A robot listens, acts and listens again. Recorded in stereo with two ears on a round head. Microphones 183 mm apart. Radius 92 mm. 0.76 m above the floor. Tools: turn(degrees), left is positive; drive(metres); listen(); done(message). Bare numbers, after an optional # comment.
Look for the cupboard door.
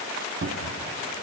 # The cupboard door: about 65° right or 115° right.
turn(-65)
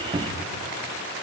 # So it is at 35° right.
turn(-35)
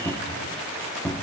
done("Facing the cupboard door, 1 to 2 m away.")